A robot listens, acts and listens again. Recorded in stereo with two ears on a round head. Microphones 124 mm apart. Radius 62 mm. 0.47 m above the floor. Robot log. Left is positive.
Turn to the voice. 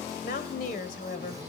note: The woman speaking: about 65° left or 115° left.
cmd yaw +65
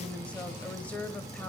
note: So it is at 10° left.
cmd yaw +10
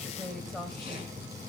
end: Found it: a woman speaking, straight ahead, 2 to 4 m away.